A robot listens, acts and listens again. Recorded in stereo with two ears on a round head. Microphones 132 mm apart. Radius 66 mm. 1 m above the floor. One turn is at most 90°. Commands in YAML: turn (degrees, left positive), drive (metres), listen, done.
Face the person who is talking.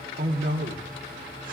turn: -65
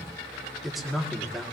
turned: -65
done: "Facing the man speaking."